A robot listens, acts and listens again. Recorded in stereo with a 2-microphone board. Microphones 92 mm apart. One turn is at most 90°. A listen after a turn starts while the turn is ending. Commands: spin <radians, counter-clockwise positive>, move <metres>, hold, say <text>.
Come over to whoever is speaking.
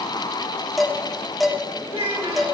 spin -1.22
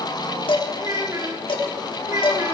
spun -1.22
spin -0.70
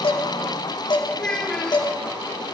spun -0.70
spin 0.26
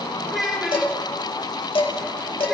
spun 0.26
move 1.0
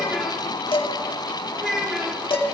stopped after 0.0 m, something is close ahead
say Blocked. The child speaking is further on, straight ahead.